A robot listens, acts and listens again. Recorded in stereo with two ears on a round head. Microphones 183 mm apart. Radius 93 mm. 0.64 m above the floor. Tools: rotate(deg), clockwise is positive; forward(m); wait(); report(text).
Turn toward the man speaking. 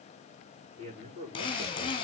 rotate(30)
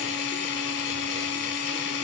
wait()
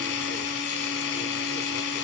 wait()
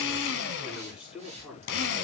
report("Found it: a man speaking, straight ahead, over 4 m away.")